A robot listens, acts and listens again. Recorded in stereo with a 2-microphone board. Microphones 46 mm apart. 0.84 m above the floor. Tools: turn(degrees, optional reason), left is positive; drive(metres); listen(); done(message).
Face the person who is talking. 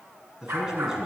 turn(degrees=-30)
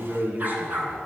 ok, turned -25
turn(degrees=-140, reason="So it is at 140° right.")
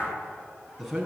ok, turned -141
done("Found it: a man speaking, straight ahead, over 4 m away.")